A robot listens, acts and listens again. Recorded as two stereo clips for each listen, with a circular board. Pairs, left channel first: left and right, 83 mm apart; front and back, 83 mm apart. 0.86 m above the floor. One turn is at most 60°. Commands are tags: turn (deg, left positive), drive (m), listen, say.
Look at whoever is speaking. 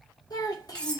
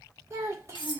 <turn deg="60"/>
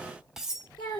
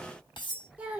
<turn deg="60"/>
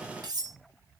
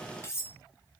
<turn deg="50"/>
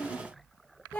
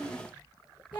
<turn deg="20"/>
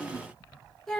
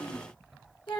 <say>Facing the child speaking.</say>